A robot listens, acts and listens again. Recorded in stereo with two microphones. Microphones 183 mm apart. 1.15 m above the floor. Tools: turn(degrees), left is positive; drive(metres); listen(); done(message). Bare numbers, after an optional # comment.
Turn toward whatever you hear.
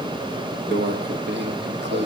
turn(-90)
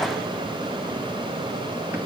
listen()
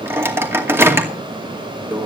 # The microwave is now 15° right.
turn(-15)
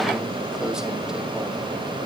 listen()
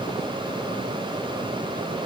listen()
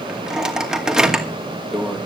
done("Found it: a microwave, straight ahead, 2 to 4 m away.")